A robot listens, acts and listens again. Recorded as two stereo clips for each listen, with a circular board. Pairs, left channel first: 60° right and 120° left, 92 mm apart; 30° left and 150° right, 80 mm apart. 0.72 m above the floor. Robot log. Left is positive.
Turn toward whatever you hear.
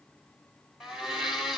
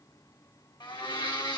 note: The blender: 35° left.
cmd yaw +35
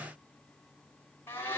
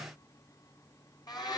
end: Found it: a blender, straight ahead, 2 to 4 m away.